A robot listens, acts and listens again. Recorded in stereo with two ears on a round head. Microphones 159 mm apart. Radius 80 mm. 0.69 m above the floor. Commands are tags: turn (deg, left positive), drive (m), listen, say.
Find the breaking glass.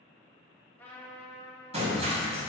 <turn deg="-40"/>
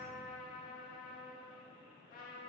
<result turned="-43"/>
<listen/>
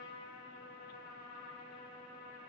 <say>I heard breaking glass, but can't make it out now. It was about 5° left or 100° right.</say>